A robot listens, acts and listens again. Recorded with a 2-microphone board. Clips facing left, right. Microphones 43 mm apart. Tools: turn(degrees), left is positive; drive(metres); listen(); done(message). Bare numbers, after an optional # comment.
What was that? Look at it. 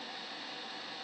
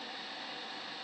listen()
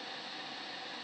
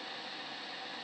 listen()
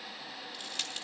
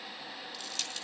# The crushing: about 20° left or 160° left.
turn(20)
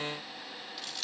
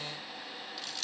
done("Found it: crushing, straight ahead.")